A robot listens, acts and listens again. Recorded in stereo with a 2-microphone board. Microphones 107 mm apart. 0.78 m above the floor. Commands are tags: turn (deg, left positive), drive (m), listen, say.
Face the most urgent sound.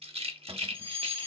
<turn deg="40"/>
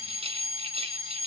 <turn deg="95"/>
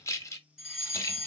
<say>Facing the fire alarm.</say>